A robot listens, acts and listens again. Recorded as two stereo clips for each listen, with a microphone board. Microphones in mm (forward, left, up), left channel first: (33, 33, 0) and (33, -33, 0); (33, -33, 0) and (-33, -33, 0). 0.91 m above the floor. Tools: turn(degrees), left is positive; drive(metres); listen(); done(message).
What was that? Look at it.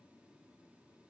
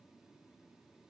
listen()
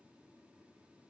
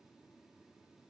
listen()
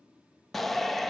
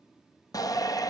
done("Found it: a shout, straight ahead, under 1 m away.")